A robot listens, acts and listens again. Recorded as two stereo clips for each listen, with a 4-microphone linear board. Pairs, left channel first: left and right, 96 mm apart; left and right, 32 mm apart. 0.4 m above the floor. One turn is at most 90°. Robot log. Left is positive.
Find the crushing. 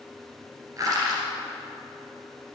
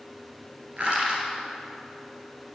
note: The crushing: about 35° right or 145° right.
cmd yaw -35
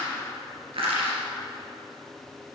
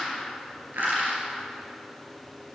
note: So it is at 110° right.
cmd yaw -90
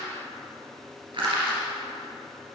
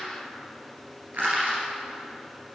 note: The crushing is now 60° right.
cmd yaw -60
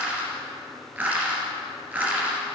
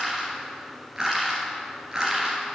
note: The crushing is now 20° right.
cmd yaw -20
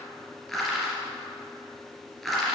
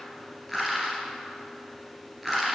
end: Found it: crushing, straight ahead, 2 to 4 m away.